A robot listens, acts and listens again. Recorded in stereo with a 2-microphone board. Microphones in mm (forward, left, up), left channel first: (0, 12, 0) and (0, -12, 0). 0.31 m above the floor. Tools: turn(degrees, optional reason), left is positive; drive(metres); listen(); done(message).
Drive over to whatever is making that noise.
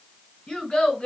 turn(degrees=30, reason="The child speaking: about 30° left or 150° left.")
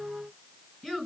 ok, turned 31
drive(metres=1.0)
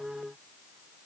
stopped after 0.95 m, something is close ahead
listen()
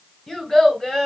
turn(degrees=10, reason="The child speaking is now 10° left.")
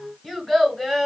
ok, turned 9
done("Arrived at the child speaking, straight ahead.")